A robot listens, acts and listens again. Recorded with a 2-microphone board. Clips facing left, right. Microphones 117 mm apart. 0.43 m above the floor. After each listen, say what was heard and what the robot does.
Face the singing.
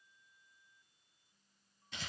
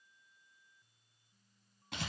Keep listening.
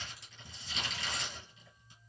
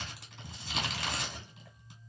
Keep listening.
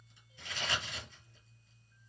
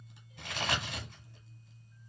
I can't make out singing to turn to.